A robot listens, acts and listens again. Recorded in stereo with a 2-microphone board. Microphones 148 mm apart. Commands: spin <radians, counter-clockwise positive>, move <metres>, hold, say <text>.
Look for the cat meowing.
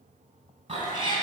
spin -0.61
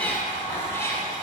spin 0.35
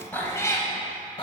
spin 0.61
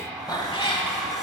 spin 0.61
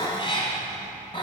spin 0.61
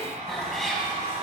say Found it: a cat meowing, straight ahead.